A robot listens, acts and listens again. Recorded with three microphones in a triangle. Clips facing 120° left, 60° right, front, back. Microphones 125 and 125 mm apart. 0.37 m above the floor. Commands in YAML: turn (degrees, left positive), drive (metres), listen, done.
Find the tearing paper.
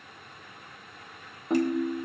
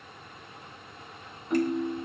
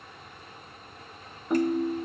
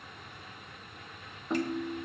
listen: true
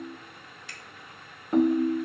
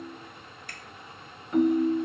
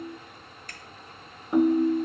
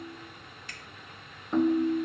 listen: true
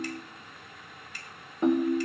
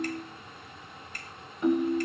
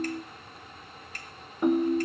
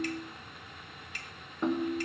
done: "I can't make out tearing paper to turn to."